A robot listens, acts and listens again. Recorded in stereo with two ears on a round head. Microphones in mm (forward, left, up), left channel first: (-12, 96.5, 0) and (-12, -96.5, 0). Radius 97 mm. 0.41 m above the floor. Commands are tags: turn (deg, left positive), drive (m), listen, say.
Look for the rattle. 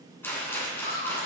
<turn deg="30"/>
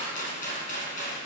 <turn deg="140"/>
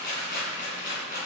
<turn deg="45"/>
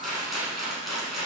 <say>Found it: a rattle, straight ahead.</say>